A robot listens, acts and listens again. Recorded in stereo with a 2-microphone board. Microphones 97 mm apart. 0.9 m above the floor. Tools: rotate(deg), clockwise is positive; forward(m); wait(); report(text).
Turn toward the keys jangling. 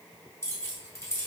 rotate(-30)
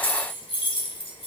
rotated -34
rotate(-120)
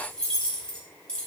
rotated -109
rotate(-10)
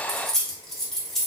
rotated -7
report("Facing the keys jangling.")